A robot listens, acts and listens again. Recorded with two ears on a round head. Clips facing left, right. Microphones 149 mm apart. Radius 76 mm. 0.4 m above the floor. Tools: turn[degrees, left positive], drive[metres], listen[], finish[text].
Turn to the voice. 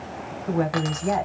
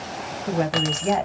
Thought: The woman speaking: about 30° right or 150° right.
Action: turn[-30]
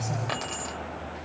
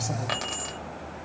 Action: listen[]
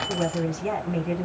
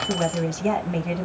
Thought: So it is at 115° right.
Action: turn[-115]
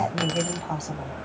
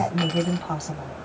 Action: finish[Found it: a woman speaking, straight ahead, 1 to 2 m away.]